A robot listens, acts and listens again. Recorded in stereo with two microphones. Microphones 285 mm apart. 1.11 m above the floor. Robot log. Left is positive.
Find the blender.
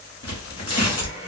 note: The blender: about 60° left or 120° left.
cmd yaw +60
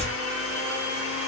note: So it is at 55° left.
cmd yaw +55
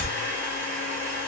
end: Facing the blender, 1 to 2 m away.